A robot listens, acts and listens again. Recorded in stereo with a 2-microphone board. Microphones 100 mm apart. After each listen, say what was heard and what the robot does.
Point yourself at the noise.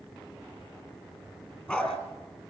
Turn 30° left.
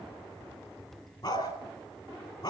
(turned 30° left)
So it is at 135° left. Turn 135° left.
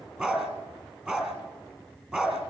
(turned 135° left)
The dog barking is now 10° right. Turn 10° right.
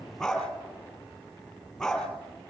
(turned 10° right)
Facing the dog barking.